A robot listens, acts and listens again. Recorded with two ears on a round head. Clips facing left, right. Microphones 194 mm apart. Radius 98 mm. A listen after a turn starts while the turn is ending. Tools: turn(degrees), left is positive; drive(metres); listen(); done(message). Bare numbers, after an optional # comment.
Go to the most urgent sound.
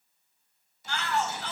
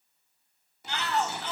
# The shout: about 20° right or 160° right.
turn(-20)
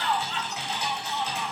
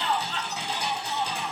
# So it is at 140° right.
turn(-140)
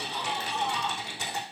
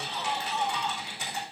drive(1.0)
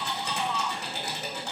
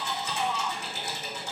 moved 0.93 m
drive(1.0)
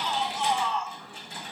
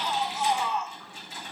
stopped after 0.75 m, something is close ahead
# The shout is now 10° right.
turn(-10)
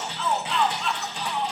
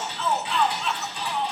done("I am next to the shout.")